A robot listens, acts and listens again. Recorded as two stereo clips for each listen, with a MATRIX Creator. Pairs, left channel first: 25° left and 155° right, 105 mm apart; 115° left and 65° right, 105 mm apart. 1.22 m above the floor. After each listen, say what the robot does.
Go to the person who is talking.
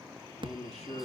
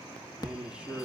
Turn 15° left.
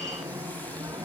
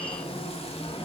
Keep listening.
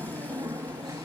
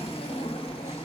Keep listening.
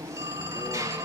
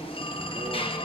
I heard a man speaking from this way, but can't make it out now. I did not reach it.